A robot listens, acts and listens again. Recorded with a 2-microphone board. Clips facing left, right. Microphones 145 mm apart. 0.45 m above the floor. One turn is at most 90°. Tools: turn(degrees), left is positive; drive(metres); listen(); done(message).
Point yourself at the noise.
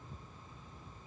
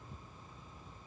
listen()
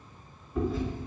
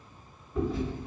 turn(degrees=30)
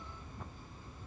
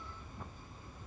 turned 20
listen()
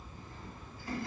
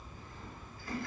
turn(degrees=90)
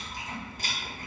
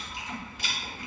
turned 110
turn(degrees=45)
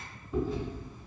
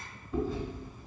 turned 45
done("Facing the chewing.")